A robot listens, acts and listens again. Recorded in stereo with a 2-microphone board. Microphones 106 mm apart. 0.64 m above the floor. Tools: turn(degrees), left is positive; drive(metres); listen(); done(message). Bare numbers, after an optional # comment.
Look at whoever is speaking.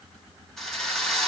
listen()
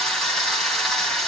listen()
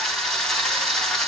done("I can't make out anyone speaking, only a drill.")